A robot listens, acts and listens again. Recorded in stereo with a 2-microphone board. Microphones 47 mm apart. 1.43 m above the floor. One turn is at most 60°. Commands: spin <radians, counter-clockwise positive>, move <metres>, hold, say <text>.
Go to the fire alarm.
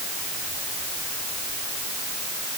hold
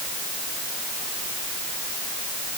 hold
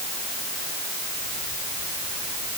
say I can't make out a fire alarm to turn to.